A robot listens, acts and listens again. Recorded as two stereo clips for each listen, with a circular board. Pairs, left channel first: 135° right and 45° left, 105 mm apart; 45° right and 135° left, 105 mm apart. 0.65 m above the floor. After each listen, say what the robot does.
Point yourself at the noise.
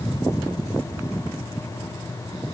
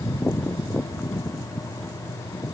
Keep listening.
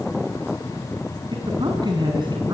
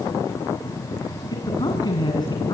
Facing the man speaking.